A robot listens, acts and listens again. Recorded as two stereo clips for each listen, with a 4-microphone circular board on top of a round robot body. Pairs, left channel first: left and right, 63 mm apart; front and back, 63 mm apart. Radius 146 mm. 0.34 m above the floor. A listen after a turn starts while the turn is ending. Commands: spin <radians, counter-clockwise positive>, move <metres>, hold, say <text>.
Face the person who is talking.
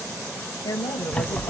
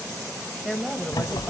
spin 1.57
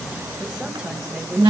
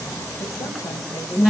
hold
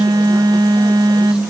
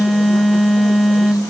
hold
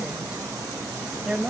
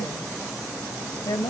spin -0.26
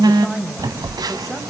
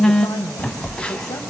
hold
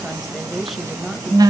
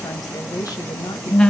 say Facing the woman speaking, 2 to 4 m away.